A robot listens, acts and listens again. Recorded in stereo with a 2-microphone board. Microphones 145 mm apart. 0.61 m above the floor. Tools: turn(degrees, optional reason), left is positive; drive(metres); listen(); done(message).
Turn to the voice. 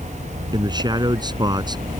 turn(degrees=-30, reason="The man speaking: about 30° right or 150° right.")
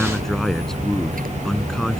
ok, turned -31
done("Facing the man speaking.")